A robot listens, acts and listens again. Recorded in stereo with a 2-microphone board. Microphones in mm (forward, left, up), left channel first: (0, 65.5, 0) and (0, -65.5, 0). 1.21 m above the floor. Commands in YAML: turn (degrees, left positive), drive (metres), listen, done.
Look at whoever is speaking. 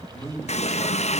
turn: 20
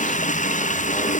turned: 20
listen: true
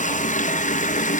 listen: true
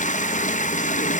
done: "I heard a man speaking, but can't make it out now. It was about straight ahead or 140° left."